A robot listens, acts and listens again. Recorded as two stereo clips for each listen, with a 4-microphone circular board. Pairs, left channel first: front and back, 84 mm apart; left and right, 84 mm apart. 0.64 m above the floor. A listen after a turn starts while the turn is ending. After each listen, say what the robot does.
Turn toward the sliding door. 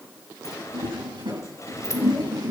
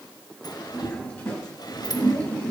Turn 50° left.
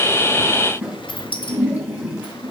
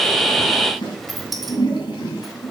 Facing the sliding door, 1 to 2 m away.